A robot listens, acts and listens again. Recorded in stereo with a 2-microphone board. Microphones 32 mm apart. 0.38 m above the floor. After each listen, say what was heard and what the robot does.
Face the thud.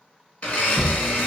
Turn 30° right.
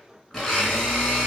Keep listening.
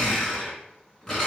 I heard a thud, but can't make it out now. It was about 15° left or 135° right.